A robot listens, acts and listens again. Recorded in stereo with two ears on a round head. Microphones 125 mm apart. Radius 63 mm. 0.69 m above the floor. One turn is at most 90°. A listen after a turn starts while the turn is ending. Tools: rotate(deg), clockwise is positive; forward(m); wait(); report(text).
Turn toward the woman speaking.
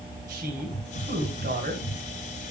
rotate(75)
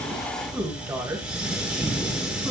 rotate(20)
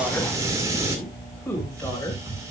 rotate(-15)
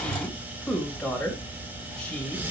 report("Found it: a woman speaking, straight ahead.")